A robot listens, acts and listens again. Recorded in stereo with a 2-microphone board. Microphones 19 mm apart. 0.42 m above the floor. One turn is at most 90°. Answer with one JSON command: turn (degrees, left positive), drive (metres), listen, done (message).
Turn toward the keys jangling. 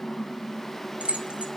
{"turn": -65}
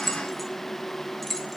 {"done": "Facing the keys jangling."}